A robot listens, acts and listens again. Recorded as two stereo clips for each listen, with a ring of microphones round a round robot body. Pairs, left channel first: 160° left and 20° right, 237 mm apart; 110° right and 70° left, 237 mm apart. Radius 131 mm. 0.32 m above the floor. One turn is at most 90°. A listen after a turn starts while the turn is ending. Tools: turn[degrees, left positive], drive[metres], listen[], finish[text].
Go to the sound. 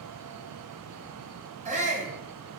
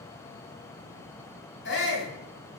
Thought: The shout: 80° right.
Action: turn[-80]
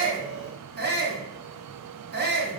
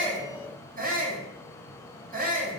Thought: The shout is now 20° left.
Action: turn[20]
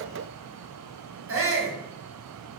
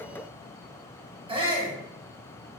Action: drive[1.0]
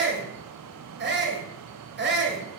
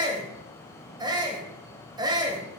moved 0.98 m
Action: drive[1.0]
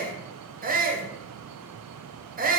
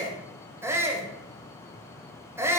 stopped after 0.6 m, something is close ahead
Action: finish[Arrived at the shout, straight ahead.]